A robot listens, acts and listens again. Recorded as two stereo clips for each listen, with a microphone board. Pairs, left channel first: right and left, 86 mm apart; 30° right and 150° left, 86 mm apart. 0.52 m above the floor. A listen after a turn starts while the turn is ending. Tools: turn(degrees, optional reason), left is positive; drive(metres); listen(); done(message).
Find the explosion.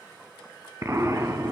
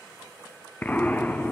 turn(degrees=40, reason="The explosion: 40° left.")
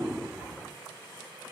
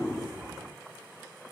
done("Facing where the explosion came from. I can't hear it now.")